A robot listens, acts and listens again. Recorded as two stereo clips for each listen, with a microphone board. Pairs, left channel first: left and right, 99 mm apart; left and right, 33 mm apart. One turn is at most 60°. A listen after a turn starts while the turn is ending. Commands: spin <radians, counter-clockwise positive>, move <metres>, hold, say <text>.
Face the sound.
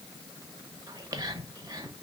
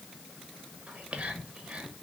spin -0.61
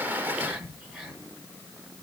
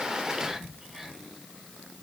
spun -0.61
say Facing the whispering.